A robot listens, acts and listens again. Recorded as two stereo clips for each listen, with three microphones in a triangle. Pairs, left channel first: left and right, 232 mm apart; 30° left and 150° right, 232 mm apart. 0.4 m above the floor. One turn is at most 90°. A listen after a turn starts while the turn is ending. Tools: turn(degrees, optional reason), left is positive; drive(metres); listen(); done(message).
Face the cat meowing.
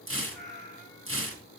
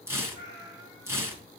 done("Facing the cat meowing.")